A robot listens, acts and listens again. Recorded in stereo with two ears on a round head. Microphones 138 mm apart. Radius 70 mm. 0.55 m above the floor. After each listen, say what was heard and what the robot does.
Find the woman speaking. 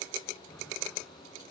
Keep listening.
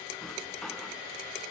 Keep listening.
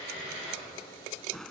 I can't make out a woman speaking, only a drawer.